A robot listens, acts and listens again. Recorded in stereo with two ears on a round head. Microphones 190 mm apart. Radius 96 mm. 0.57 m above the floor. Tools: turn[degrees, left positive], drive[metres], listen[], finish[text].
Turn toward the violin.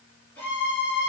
Action: turn[30]
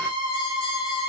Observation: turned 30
Thought: So it is at 20° right.
Action: turn[-20]
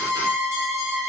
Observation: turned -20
Action: finish[Facing the violin, 1 to 2 m away.]